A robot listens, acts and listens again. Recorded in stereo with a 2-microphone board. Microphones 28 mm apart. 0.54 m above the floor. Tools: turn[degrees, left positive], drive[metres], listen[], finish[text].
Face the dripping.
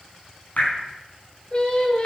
Thought: The dripping: about 60° left or 120° left.
Action: turn[60]
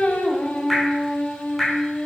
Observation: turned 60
Action: finish[Found it: dripping, straight ahead.]